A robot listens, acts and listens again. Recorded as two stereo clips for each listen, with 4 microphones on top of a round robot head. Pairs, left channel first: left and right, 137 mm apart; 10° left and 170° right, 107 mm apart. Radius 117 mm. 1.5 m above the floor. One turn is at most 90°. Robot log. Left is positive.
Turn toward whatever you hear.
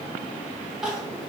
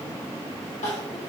end: Facing the crying.